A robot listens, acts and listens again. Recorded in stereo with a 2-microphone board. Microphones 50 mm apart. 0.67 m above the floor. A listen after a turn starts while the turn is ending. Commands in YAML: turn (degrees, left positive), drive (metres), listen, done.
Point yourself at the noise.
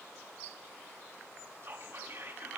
turn: -55
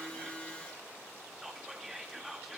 done: "Facing the whispering, 1 to 2 m away."